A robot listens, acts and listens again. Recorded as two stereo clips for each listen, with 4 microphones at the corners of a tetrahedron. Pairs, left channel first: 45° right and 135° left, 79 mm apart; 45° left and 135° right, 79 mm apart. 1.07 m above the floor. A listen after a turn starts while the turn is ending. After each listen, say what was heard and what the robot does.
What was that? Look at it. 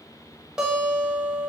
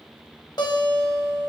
The guitar: 55° left. Turn 55° left.
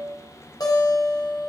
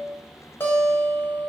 The guitar is now 15° right. Turn 15° right.
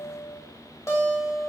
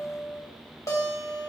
Found it: a guitar, straight ahead.